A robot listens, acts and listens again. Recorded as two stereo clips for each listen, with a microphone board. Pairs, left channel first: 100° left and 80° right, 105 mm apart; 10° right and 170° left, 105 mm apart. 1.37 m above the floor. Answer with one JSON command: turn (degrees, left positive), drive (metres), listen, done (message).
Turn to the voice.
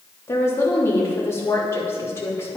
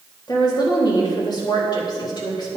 {"turn": 35}
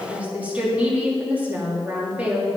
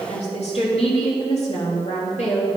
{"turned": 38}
{"done": "Facing the woman speaking, 2 to 4 m away."}